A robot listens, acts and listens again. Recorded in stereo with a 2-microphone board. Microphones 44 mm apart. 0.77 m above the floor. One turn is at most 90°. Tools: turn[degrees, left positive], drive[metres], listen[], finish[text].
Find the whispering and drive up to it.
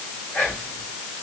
Thought: The whispering: about 45° left or 135° left.
Action: turn[45]
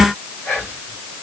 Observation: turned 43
Thought: So it is at 95° left.
Action: turn[90]
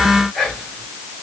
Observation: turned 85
Action: drive[1.0]
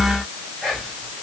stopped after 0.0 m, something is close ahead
Thought: The whispering is now 10° left.
Action: turn[10]
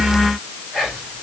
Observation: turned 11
Action: finish[Blocked. The whispering is further on, straight ahead.]